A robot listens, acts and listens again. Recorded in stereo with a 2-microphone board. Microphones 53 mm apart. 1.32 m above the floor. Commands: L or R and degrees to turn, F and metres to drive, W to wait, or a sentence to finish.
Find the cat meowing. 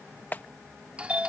W
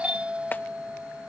W
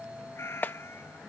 L50
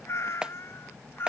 L50
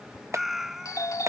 R10
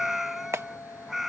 Facing the cat meowing.